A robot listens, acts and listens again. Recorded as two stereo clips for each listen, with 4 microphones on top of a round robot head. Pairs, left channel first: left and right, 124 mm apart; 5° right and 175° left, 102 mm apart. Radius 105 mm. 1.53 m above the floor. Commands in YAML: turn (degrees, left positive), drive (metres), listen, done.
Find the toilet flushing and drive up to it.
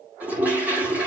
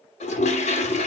turn: -10
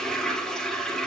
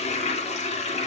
drive: 1.0
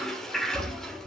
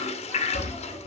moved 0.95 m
drive: 1.0
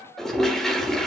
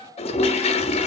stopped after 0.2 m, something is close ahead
done: "Arrived at the toilet flushing, straight ahead."